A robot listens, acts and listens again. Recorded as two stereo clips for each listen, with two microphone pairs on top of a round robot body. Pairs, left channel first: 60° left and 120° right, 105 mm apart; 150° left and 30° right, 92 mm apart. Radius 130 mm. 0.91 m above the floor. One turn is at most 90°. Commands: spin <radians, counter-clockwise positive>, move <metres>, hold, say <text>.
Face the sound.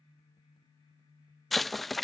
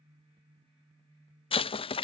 spin 1.57
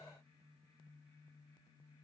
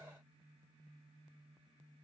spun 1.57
spin 1.05
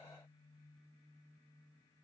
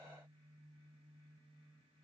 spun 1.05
say I heard an explosion from this way, but can't make it out now.